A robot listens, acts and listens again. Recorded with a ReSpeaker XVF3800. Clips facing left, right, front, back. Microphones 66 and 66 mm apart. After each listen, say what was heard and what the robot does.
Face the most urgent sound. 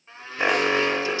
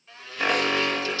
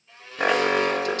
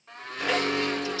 The alarm: 20° left. Turn 20° left.
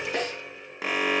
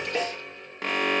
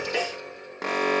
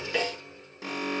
Facing the alarm, 1 to 2 m away.